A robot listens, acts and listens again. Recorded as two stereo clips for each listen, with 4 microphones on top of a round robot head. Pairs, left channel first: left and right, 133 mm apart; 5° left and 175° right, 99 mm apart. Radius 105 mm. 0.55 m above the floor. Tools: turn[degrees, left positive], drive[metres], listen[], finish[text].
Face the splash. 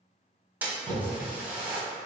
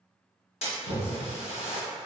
Thought: The splash: 10° right.
Action: turn[-10]
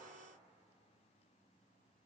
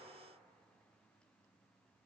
Action: finish[Facing where the splash came from. I can't hear it now.]